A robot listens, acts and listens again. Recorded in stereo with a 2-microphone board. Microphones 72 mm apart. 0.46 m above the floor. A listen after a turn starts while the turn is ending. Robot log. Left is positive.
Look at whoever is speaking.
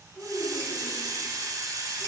cmd yaw -30
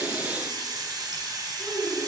note: So it is at 25° left.
cmd yaw +25
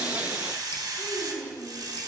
end: Facing the child speaking, 2 to 4 m away.